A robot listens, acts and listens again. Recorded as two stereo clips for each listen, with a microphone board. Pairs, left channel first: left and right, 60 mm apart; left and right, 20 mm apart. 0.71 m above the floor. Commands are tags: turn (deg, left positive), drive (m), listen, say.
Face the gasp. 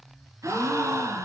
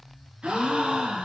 <turn deg="-60"/>
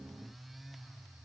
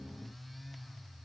<listen/>
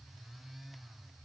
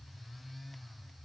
<say>I heard a gasp, but can't make it out now. It was about straight ahead or 60° right.</say>